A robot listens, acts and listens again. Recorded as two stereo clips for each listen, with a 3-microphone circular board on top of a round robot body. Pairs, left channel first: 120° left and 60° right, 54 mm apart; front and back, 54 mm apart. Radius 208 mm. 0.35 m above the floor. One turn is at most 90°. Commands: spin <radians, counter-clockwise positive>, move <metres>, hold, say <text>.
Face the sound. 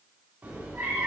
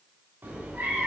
spin -1.57
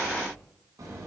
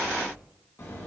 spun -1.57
spin -0.70
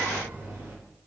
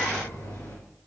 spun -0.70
say Found it: a cat meowing, straight ahead.